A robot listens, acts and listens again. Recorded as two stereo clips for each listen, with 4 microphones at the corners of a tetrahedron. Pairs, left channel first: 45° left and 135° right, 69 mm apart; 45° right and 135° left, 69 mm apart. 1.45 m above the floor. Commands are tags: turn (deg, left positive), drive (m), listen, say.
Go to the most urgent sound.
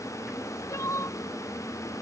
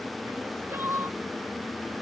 <turn deg="85"/>
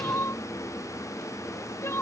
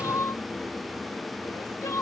<drive m="1.0"/>
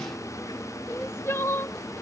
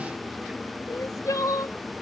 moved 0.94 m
<drive m="1.0"/>
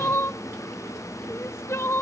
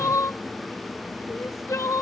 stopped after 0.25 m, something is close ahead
<say>I am next to the crying.</say>